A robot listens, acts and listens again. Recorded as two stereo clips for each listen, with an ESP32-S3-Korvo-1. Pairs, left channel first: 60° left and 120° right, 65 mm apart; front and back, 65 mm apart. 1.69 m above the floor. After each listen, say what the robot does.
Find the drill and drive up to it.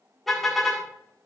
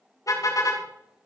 Keep listening.
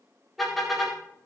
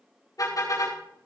Keep listening.
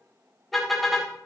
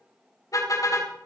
I can't make out a drill, only a car horn.